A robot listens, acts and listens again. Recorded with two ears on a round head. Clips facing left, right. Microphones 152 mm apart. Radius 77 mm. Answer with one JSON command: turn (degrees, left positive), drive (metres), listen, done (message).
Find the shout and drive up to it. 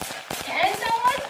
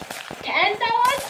{"turn": -75}
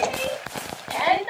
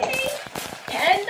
{"turn": -30}
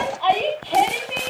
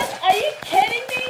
{"turn": -15}
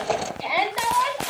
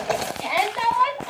{"drive": 1.0}
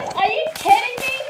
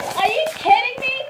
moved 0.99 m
{"drive": 1.0}
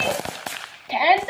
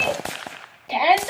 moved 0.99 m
{"drive": 1.0}
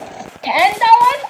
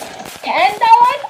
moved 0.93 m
{"drive": 1.0}
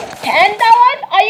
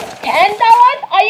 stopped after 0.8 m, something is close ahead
{"done": "I am next to the shout."}